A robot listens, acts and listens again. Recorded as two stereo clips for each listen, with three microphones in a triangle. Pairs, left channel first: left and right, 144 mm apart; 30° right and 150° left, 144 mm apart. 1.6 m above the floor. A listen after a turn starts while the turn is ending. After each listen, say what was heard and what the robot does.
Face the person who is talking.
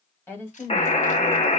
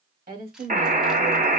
The woman speaking: 165° left. Turn 165° left.
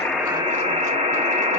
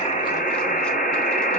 Keep listening.
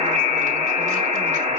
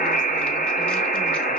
Keep listening.
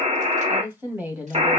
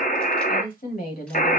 The woman speaking is now 10° right. Turn 10° right.
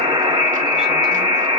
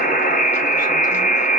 Keep listening.
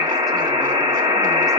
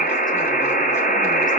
Keep listening.
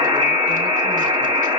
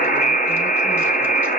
Facing where the woman speaking came from. I can't hear it now.